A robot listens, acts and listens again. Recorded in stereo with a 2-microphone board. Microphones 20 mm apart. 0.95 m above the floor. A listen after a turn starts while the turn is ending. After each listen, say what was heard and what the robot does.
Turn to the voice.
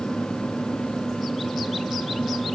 Keep listening.
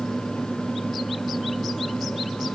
Keep listening.
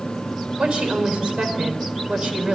The woman speaking: about 65° right or 115° right. Turn 65° right.
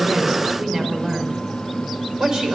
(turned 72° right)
So it is at 40° right. Turn 40° right.
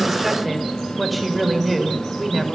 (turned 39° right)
Found it: a woman speaking, straight ahead, over 4 m away.